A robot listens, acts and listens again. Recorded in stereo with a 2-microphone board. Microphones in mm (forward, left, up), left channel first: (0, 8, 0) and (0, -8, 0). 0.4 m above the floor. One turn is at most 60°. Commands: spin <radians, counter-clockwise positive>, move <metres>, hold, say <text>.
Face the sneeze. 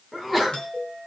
spin -0.52
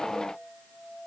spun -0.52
hold
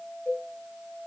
say I heard a sneeze, but can't make it out now. It was about 20° left or 140° right.